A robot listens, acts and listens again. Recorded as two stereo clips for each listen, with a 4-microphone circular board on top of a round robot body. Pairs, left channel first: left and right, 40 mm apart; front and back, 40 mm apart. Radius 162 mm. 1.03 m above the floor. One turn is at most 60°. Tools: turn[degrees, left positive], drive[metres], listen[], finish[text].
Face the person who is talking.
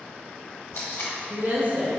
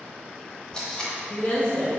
Thought: The woman speaking: 45° right.
Action: turn[-45]
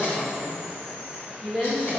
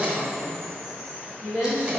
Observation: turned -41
Thought: The woman speaking is now 10° left.
Action: turn[10]
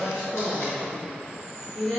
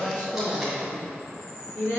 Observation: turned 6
Thought: The woman speaking is now 10° left.
Action: turn[10]
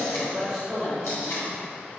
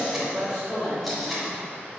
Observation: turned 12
Action: finish[Facing the woman speaking.]